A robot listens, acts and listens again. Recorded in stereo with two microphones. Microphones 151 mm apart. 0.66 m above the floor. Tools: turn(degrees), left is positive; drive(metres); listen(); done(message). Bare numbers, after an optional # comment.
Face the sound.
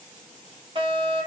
# The fire alarm: about 40° right or 140° right.
turn(-40)
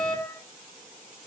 # So it is at 100° right.
turn(-100)
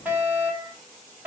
# The fire alarm is now 10° right.
turn(-10)
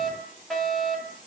done("Facing the fire alarm.")